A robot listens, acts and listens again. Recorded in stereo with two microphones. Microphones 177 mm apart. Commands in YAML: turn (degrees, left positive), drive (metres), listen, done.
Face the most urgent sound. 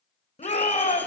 turn: 40
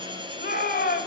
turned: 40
turn: 95
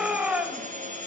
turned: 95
done: "Facing the shout, 1 to 2 m away."